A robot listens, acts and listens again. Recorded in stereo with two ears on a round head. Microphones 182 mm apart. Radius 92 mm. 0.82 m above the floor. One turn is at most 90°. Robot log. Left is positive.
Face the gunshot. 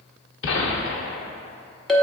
note: The gunshot: about 65° left or 115° left.
cmd yaw +65
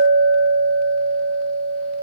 cmd idle
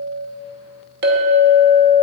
end: I heard a gunshot, but can't make it out now. It was about straight ahead or 50° left.